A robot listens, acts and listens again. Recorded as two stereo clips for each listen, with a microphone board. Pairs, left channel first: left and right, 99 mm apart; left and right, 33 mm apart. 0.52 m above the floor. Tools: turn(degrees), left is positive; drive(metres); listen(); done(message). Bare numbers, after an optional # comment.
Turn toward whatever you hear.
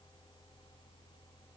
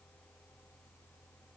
listen()
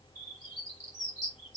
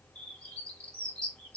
# The bird: about 35° left or 145° left.
turn(35)
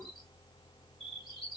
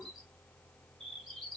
done("Found it: a bird, straight ahead, 2 to 4 m away.")